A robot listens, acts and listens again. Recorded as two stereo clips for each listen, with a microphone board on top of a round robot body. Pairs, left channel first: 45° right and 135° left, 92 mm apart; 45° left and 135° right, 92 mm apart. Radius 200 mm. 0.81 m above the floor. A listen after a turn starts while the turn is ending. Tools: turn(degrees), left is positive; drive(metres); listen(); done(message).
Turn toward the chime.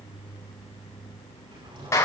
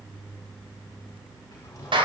listen()
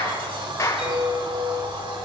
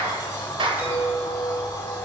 turn(degrees=155)
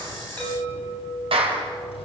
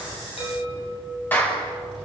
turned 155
turn(degrees=15)
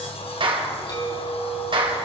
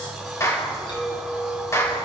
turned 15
done("Found it: a chime, straight ahead, over 4 m away.")